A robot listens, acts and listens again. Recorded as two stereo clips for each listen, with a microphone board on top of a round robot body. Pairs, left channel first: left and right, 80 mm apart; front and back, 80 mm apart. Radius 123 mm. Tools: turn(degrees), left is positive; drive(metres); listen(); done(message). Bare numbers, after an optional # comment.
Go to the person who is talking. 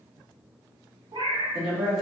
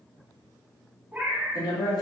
drive(1.0)
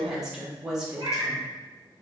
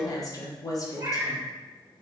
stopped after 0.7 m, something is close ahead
# The woman speaking is now 10° right.
turn(-10)
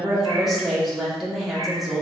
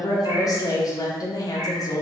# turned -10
done("I am next to the woman speaking.")